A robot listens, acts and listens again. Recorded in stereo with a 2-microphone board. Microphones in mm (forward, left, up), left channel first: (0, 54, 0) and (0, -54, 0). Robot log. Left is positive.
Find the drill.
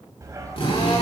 note: The drill: about 55° left or 125° left.
cmd yaw +55
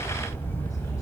cmd idle
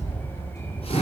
cmd idle
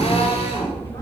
note: So it is at 65° left.
cmd yaw +65
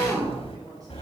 end: Facing the drill.